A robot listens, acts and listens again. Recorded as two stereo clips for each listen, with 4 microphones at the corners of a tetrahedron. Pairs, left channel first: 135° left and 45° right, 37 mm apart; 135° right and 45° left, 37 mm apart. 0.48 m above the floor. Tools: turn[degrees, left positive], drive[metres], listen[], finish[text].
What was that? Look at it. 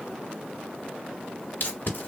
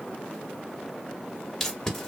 Thought: The tape being pulled: 145° left.
Action: turn[145]
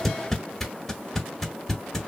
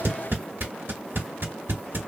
Thought: The tape being pulled is now 55° left.
Action: turn[55]
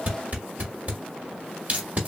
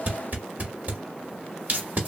Action: finish[Found it: tape being pulled, straight ahead, 1 to 2 m away.]